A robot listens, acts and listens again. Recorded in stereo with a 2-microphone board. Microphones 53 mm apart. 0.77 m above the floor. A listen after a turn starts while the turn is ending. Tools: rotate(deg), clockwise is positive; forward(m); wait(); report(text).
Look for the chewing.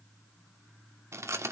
rotate(65)
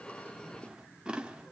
rotate(20)
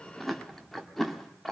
report("Found it: chewing, straight ahead, 1 to 2 m away.")